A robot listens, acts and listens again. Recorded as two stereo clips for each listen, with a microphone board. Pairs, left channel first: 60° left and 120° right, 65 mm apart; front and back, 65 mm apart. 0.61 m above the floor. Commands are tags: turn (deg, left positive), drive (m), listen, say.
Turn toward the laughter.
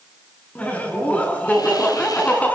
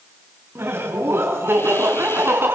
<turn deg="130"/>
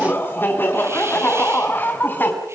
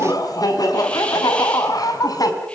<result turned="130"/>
<say>Facing the laughter, over 4 m away.</say>